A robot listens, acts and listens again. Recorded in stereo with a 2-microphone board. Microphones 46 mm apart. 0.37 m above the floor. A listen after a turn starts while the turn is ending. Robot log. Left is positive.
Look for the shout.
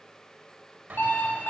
cmd idle
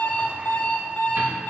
cmd idle
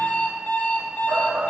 note: The shout: about 55° right or 125° right.
cmd yaw -55
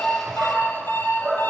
note: So it is at 20° right.
cmd yaw -20
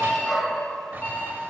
end: Found it: a shout, straight ahead, 1 to 2 m away.